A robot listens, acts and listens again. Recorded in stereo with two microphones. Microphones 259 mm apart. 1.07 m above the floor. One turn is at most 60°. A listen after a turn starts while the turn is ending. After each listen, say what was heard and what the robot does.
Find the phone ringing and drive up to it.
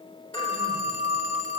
The phone ringing: about 70° left or 110° left. Turn 60° left.
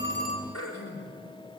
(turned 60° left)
Keep listening.
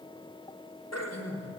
Keep listening.
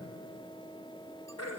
I heard a phone ringing, but can't make it out now. It was about 10° left or 50° left. I did not reach it.